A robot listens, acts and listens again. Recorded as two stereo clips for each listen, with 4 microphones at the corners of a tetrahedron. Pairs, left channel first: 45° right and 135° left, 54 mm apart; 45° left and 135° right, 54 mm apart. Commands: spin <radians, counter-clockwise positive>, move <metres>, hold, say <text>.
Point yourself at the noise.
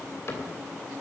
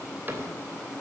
spin -1.48
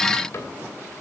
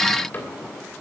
spin -0.17
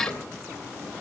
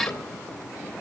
say Found it: a cupboard door, straight ahead.